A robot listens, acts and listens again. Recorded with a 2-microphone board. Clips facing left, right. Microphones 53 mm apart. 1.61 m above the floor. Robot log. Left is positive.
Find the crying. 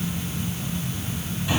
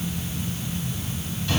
cmd idle
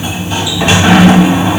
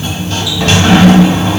cmd idle
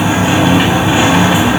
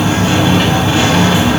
end: I can't make out crying, only a sliding door.